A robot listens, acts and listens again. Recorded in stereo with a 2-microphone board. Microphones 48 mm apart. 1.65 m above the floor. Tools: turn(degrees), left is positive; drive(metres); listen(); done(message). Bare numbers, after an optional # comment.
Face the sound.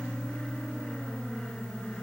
listen()
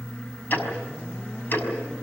# The ticking: about 40° left or 140° left.
turn(40)
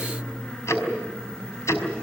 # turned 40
# So it is at 95° left.
turn(95)
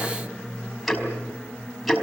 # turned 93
done("Found it: ticking, straight ahead.")